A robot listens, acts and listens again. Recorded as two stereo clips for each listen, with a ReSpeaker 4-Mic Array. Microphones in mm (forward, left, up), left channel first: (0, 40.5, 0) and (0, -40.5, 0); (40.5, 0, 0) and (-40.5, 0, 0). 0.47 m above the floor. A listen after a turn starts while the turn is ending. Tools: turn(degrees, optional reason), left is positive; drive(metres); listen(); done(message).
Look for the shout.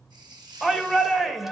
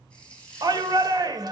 turn(degrees=180, reason="The shout: straight behind.")
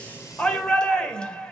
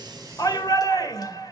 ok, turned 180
turn(degrees=15, reason="The shout is now 15° left.")
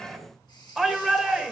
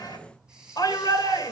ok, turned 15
done("Found it: a shout, straight ahead, 2 to 4 m away.")